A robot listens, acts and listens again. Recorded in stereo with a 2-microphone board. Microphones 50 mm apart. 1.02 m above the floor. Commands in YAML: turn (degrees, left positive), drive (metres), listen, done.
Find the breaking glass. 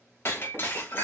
turn: 55
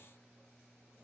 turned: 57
listen: true
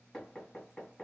done: "I heard breaking glass, but can't make it out now. It was about straight ahead or 70° left."